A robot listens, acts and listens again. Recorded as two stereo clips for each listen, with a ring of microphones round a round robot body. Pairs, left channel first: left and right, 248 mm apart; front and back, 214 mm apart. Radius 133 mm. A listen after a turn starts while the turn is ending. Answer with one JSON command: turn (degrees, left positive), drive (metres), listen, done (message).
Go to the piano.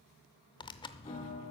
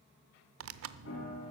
{"turn": 20}
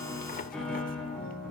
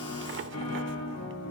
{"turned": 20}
{"drive": 1.0}
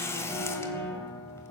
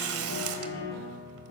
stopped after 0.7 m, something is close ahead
{"turn": 10}
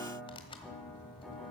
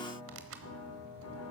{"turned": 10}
{"done": "Something is in my way. I am facing the piano but have not reached it."}